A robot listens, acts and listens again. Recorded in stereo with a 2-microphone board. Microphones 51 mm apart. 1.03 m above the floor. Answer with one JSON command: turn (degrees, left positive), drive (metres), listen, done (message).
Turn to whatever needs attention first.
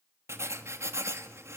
{"listen": true}
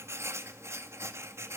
{"listen": true}
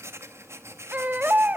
{"turn": -40}
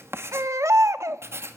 {"turn": -100}
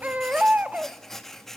{"turn": -30}
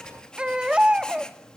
{"turn": -20}
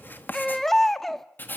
{"done": "Found it: a baby crying, straight ahead, 1 to 2 m away."}